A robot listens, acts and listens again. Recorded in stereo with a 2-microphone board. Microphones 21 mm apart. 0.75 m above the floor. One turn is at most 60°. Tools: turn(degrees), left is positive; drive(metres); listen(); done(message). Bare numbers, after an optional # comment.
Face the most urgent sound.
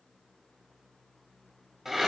listen()
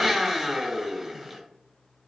listen()
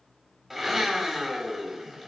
done("I can't make out anything urgent, only a blender.")